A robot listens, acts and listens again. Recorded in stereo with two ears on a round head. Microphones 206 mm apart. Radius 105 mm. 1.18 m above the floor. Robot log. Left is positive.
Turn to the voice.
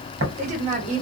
note: The woman speaking: about 35° right or 145° right.
cmd yaw -35
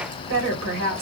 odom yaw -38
note: So it is at 105° right.
cmd yaw -105
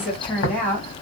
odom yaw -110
note: The woman speaking is now 10° left.
cmd yaw +10
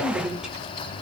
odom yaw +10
end: Found it: a woman speaking, straight ahead, 1 to 2 m away.